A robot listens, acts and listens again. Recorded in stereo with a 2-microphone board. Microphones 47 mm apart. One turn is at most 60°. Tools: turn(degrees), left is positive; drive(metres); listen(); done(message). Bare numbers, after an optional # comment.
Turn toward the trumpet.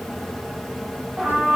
# The trumpet: about 20° right or 160° right.
turn(-20)
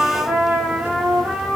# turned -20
# So it is at 140° right.
turn(-60)
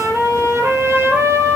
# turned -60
# The trumpet is now 100° right.
turn(-60)
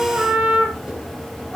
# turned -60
# The trumpet is now 30° right.
turn(-30)
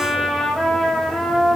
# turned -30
done("Facing the trumpet, over 4 m away.")